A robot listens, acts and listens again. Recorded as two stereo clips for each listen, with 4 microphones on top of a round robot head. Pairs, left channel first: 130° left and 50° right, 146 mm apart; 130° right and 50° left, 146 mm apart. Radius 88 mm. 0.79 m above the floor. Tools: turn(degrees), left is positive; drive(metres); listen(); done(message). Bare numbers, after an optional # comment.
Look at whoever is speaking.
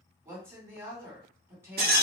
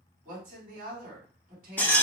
# The woman speaking: 20° left.
turn(20)
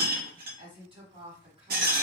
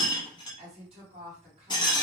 done("Facing the woman speaking, 1 to 2 m away.")